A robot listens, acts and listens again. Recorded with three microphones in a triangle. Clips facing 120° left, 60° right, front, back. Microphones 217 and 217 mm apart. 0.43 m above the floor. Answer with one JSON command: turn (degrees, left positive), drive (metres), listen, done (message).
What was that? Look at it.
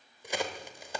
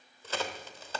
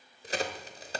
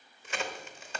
{"turn": 45}
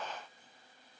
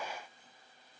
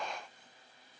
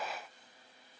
{"done": "Facing where the crack came from. I can't hear it now."}